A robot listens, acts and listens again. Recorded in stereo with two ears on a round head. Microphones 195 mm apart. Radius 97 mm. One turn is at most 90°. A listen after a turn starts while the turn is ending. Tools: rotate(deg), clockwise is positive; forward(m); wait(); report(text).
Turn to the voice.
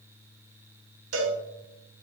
wait()
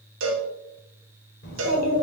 rotate(-40)
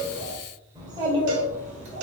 rotate(30)
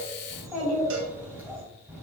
report("Found it: a child speaking, straight ahead.")